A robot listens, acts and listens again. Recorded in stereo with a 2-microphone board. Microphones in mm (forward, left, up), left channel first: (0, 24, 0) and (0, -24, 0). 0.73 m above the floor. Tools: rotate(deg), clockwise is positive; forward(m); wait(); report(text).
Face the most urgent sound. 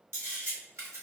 wait()
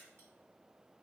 wait()
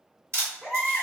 rotate(30)
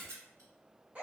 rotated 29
rotate(145)
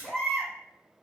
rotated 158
rotate(-15)
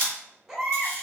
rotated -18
report("Found it: a baby crying, straight ahead.")